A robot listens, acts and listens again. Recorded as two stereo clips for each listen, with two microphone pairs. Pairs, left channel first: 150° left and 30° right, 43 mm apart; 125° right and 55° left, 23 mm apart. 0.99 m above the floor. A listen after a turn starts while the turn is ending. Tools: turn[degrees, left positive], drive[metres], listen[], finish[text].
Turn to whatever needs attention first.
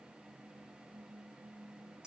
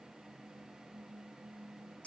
Action: listen[]
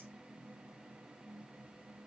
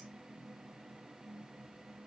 Action: listen[]
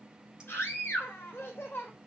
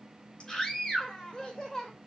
Thought: The scream: 175° left.
Action: turn[175]
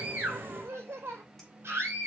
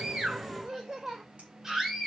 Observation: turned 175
Thought: The scream is now 15° right.
Action: turn[-15]
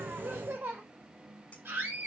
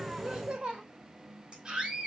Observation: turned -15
Action: finish[Found it: a scream, straight ahead.]